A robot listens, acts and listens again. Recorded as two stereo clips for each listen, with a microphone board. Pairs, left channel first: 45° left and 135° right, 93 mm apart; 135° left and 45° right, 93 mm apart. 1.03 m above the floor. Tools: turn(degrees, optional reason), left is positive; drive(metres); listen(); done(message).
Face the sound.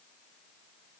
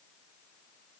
listen()
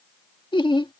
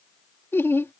turn(degrees=70, reason="The laughter: 70° left.")
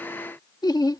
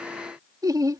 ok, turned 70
done("Found it: laughter, straight ahead.")